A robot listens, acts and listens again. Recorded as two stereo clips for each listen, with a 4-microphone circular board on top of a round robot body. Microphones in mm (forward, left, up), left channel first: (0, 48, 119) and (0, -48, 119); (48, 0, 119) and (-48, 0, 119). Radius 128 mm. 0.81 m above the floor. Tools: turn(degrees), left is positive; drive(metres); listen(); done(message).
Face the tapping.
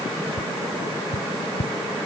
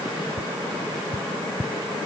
turn(degrees=105)
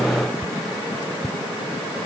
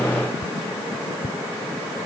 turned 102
done("Found it: tapping, straight ahead.")